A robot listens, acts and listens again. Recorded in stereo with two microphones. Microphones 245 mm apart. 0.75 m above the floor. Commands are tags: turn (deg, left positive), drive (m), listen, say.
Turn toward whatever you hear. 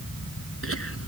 <turn deg="65"/>
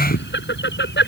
<turn deg="45"/>
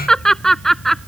<say>Facing the laughter.</say>